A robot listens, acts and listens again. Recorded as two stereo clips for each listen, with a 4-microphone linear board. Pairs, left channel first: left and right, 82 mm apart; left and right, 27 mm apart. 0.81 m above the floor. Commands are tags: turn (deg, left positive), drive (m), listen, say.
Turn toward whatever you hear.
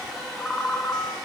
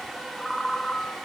<turn deg="25"/>
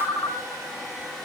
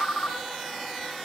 <turn deg="130"/>
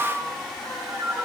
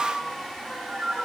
<say>Facing the ringtone.</say>